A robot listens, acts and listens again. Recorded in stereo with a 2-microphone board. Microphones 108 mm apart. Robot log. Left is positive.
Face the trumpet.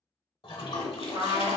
note: The trumpet: about 50° right or 130° right.
cmd yaw -50
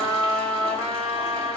note: So it is at 80° right.
cmd yaw -80
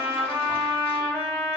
note: The trumpet is now 20° right.
cmd yaw -20
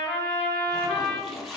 end: Facing the trumpet, 1 to 2 m away.